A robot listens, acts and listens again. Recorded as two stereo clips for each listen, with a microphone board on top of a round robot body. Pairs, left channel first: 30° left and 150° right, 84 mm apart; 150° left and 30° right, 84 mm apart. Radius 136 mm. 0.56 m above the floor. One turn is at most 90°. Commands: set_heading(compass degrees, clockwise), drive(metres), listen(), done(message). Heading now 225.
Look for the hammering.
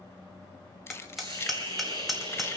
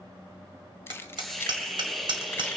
set_heading(285)
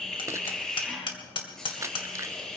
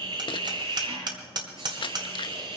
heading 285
done("Facing the hammering.")